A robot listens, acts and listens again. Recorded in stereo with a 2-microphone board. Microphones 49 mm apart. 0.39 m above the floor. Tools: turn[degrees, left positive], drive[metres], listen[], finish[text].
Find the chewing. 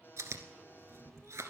Action: turn[-90]
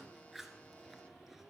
Action: finish[Found it: chewing, straight ahead.]